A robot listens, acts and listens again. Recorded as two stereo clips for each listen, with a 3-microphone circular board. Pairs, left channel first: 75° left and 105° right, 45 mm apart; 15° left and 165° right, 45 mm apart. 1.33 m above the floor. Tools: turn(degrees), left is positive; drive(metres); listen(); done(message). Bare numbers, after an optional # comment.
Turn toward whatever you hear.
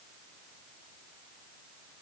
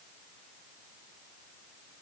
listen()
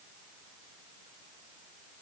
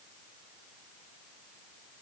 listen()
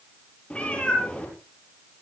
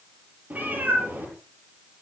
# The cat meowing: 145° left.
turn(145)
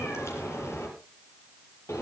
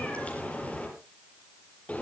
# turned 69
# The cat meowing is now 75° left.
turn(75)
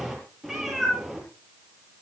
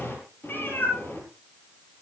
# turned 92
# The cat meowing is now 20° right.
turn(-20)
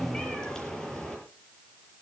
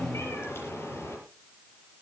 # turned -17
done("Found it: a cat meowing, straight ahead, over 4 m away.")